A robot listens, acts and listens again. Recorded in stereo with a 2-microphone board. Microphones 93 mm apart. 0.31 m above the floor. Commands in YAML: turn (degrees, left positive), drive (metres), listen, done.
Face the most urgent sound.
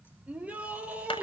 turn: -30
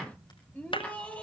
turn: 15
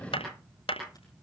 listen: true
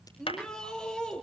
done: "Facing the shout."